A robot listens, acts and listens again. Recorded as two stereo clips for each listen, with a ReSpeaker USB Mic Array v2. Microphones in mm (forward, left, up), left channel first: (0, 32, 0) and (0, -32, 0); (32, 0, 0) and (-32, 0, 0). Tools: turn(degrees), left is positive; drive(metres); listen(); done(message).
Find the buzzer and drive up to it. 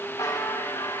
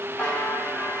turn(degrees=70)
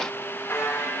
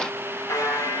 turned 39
turn(degrees=35)
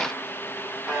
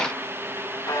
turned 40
drive(metres=1.0)
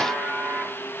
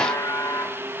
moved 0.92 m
turn(degrees=-10)
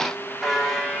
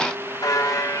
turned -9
drive(metres=1.0)
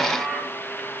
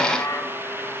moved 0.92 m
drive(metres=1.0)
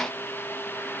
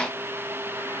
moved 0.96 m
listen()
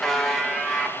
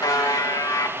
drive(metres=1.0)
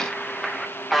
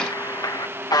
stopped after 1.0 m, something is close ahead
done("Arrived at the buzzer, straight ahead.")